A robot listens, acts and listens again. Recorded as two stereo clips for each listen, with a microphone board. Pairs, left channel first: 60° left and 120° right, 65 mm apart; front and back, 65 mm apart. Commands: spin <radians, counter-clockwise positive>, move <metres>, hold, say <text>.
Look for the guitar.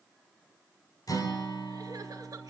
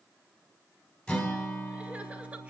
spin 1.31
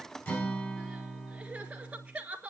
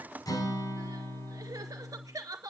say Found it: a guitar, straight ahead.